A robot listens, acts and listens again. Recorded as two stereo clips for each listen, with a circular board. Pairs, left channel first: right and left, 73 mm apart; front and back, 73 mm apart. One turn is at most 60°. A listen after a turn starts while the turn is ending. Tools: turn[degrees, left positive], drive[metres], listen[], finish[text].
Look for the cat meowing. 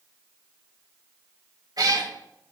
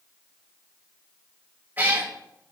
Thought: The cat meowing: 115° left.
Action: turn[60]
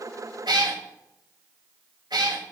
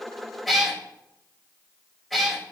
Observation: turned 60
Thought: The cat meowing is now 85° left.
Action: turn[60]
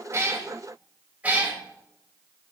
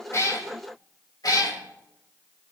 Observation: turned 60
Thought: The cat meowing is now 20° left.
Action: turn[20]
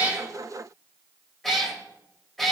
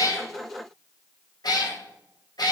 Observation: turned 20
Action: finish[Facing the cat meowing, 1 to 2 m away.]